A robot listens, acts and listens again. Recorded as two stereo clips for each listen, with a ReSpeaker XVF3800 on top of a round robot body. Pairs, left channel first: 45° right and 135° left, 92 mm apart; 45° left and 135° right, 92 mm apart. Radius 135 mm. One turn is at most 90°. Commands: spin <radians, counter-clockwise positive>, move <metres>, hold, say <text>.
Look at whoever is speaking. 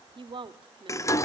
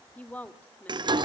spin 1.57
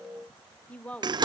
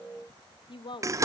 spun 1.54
spin 0.52
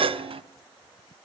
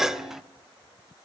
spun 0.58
hold
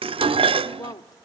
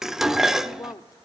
say Found it: a woman speaking, straight ahead, 1 to 2 m away.